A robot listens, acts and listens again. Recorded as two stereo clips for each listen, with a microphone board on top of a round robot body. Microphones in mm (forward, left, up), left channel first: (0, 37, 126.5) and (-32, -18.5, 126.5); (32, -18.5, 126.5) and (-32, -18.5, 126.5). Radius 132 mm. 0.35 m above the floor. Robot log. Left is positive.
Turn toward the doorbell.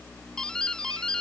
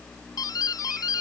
note: The doorbell: 20° right.
cmd yaw -20
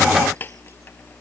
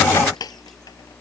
end: Found it: a doorbell, straight ahead.